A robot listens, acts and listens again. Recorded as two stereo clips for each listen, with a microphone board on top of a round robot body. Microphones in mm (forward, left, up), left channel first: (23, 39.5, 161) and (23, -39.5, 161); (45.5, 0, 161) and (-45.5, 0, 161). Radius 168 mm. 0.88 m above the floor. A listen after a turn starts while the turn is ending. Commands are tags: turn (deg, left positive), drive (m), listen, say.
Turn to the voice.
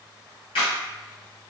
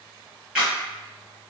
<listen/>
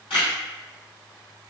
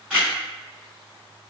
<listen/>
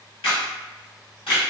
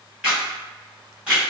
<say>I can't make out anyone speaking, only a camera shutter.</say>